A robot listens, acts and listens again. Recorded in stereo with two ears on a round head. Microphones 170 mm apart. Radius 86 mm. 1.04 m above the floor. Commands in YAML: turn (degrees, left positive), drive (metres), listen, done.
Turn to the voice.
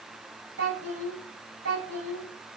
turn: -70
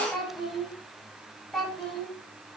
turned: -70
done: "Found it: a child speaking, straight ahead."